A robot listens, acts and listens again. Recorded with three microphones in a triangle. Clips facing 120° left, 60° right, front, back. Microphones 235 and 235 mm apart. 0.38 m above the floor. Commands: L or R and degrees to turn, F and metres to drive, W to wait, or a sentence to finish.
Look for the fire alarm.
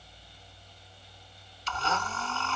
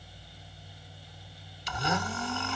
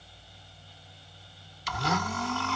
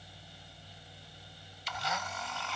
W
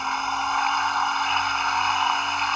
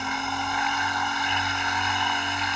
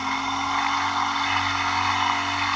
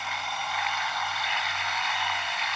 W
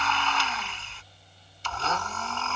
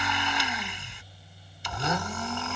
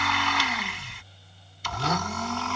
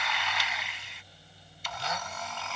I can't make out a fire alarm to turn to.